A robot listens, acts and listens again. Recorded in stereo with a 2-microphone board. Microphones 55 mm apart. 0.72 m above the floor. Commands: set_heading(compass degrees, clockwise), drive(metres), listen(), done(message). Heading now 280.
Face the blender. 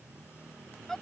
listen()
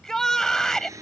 set_heading(10)
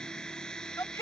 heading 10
set_heading(0)
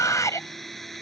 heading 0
done("Facing the blender.")